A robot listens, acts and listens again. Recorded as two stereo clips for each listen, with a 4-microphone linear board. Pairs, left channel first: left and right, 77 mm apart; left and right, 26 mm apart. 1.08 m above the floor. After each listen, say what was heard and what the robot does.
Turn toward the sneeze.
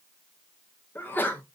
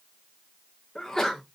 The sneeze: about 25° left or 155° left. Turn 25° left.
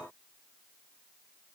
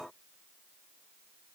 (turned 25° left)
Keep listening.
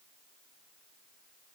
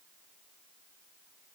I heard a sneeze, but can't make it out now. It was about straight ahead or 130° left.